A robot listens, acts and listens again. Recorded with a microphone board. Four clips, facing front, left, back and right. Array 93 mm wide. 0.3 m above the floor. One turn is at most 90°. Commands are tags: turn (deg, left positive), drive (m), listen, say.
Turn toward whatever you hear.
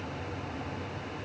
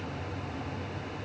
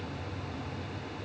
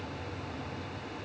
<listen/>
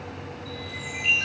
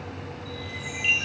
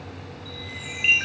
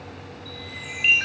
<turn deg="-90"/>
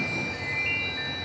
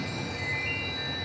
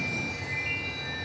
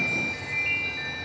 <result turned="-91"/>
<turn deg="-50"/>
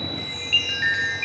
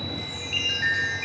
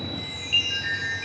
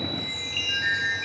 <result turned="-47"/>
<say>Facing the chime.</say>